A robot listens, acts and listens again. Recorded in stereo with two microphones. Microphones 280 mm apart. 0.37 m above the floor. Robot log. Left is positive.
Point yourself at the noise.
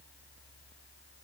cmd idle
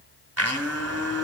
note: The blender: about 60° right or 120° right.
cmd yaw -60
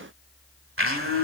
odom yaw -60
note: So it is at 55° right.
cmd yaw -55
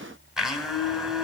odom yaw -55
end: Found it: a blender, straight ahead, 1 to 2 m away.